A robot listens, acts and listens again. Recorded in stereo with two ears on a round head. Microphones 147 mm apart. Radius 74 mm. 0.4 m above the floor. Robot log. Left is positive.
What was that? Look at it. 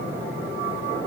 cmd idle
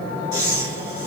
note: The breathing: about 25° right or 155° right.
cmd yaw -25
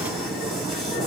cmd idle
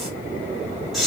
end: Found it: breathing, straight ahead.